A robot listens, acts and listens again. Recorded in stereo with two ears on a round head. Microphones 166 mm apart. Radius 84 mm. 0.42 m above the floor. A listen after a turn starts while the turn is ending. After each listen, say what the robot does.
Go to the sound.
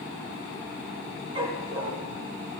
Turn 30° right.
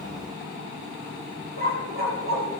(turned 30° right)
Turn 120° right.
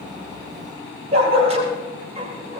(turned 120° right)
Turn 35° right.
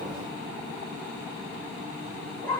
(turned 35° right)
Turn 10° left.
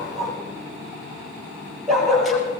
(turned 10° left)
Drive 1.0 m forward.
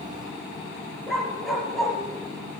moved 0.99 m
Drive 1.0 m forward.
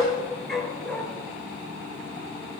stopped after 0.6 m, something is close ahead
Blocked. The dog barking is further on, straight ahead.